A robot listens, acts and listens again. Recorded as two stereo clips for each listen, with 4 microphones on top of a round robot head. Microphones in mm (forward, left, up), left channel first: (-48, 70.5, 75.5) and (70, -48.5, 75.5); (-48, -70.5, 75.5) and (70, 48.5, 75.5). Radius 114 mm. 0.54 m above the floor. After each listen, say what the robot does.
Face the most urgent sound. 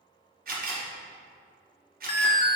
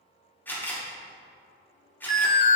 Turn 170° right.
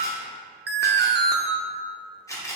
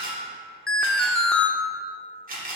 Turn 50° right.
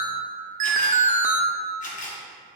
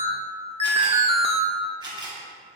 Found it: an alarm, straight ahead.